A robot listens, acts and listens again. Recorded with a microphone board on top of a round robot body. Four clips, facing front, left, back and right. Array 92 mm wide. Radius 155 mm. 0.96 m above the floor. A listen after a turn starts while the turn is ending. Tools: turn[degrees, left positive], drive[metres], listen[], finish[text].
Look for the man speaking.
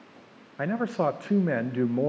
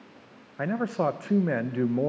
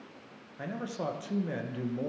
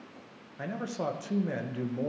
Thought: The man speaking: 40° left.
Action: turn[40]
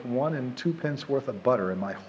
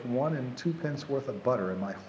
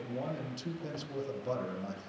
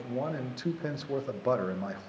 Action: finish[Facing the man speaking, 1 to 2 m away.]